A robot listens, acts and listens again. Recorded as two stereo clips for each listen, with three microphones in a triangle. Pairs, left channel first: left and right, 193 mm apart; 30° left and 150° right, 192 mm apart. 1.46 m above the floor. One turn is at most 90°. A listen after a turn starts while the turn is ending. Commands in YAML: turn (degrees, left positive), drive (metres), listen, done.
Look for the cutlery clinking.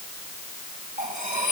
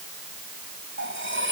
turn: -90
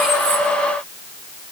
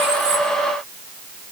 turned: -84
turn: -60
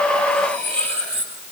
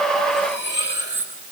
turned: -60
done: "Found it: cutlery clinking, straight ahead, over 4 m away."